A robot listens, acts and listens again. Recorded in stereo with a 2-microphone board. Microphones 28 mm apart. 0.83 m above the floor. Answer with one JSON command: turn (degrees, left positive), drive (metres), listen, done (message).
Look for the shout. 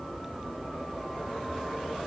{"listen": true}
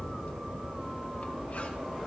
{"listen": true}
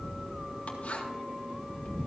{"done": "I can't make out a shout."}